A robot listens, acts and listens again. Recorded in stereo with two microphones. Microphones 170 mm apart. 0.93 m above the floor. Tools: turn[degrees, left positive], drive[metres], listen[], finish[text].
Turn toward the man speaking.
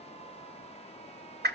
Action: listen[]
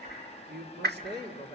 Action: turn[-90]
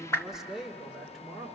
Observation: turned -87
Action: finish[Facing the man speaking, 2 to 4 m away.]